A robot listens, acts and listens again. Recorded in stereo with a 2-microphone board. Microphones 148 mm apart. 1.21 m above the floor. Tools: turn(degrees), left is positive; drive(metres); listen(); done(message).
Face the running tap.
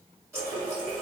turn(degrees=-20)
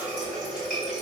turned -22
done("Found it: a running tap, straight ahead, 1 to 2 m away.")